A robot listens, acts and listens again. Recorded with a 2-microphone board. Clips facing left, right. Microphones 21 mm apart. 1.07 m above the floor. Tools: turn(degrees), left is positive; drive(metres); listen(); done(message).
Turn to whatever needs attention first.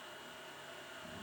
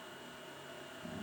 listen()
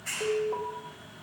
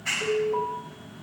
turn(degrees=90)
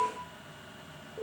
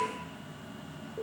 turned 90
done("Facing the alarm, over 4 m away.")